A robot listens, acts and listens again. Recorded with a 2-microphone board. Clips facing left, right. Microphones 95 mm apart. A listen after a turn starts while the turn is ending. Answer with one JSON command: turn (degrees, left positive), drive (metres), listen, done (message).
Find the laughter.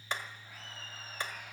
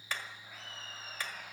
{"turn": -60}
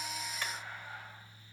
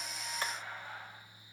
{"turn": -60}
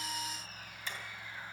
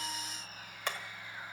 {"turn": 10}
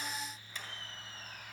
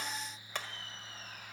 {"done": "Found it: laughter, straight ahead, over 4 m away."}